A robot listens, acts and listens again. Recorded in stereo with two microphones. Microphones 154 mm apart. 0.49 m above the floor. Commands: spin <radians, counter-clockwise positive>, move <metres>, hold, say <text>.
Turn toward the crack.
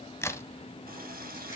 spin 0.26
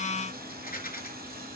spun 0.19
hold
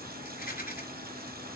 say I heard a crack, but can't make it out now. It was about 5° left or 150° left.